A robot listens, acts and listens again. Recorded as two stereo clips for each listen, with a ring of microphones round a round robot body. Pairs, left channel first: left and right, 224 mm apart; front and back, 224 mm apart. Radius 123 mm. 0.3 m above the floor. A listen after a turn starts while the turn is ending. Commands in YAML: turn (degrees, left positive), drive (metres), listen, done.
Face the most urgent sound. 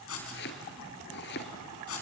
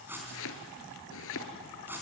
listen: true
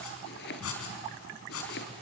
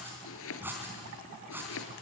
listen: true
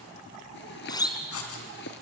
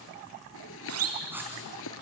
turn: 160
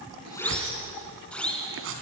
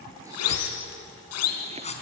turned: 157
done: "Found it: a siren, straight ahead, 2 to 4 m away."